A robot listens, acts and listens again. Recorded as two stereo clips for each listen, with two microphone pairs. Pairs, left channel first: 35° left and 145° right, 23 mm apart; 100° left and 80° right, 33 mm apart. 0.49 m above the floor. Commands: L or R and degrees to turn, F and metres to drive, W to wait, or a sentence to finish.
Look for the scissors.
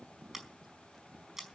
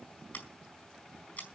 L135
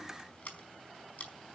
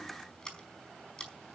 L30
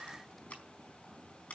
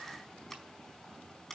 L20
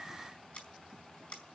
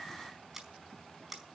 Facing the scissors.